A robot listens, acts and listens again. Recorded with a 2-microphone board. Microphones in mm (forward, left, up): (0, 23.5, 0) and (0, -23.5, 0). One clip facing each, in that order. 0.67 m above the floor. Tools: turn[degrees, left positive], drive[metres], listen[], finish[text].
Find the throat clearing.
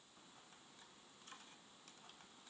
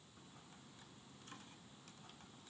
Action: listen[]
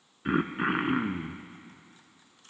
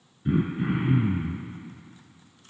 Thought: The throat clearing: about 65° left or 115° left.
Action: turn[65]
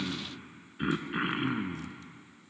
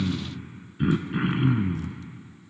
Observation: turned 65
Thought: So it is at 10° left.
Action: turn[10]
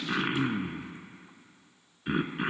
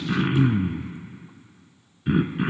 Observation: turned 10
Action: finish[Facing the throat clearing, 1 to 2 m away.]